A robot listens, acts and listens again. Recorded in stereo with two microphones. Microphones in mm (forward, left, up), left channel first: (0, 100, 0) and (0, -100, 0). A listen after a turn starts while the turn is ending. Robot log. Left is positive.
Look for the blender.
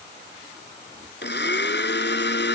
note: The blender: about 60° left or 120° left.
cmd yaw +60
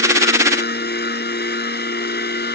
note: So it is at 55° left.
cmd yaw +55
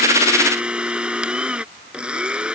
end: Found it: a blender, straight ahead.